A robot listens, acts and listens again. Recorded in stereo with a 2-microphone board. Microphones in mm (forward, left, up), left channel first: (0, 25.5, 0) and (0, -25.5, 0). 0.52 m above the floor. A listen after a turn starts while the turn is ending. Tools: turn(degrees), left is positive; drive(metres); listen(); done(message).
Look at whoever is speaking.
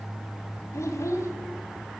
turn(degrees=70)
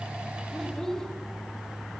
turn(degrees=10)
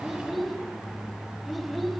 done("Found it: a child speaking, straight ahead.")